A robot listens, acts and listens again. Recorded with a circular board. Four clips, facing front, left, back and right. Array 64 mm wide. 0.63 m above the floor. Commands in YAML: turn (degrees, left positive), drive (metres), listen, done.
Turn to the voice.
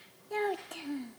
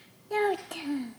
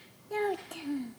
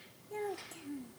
turn: 85
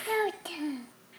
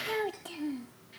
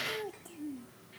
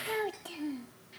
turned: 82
done: "Found it: a child speaking, straight ahead."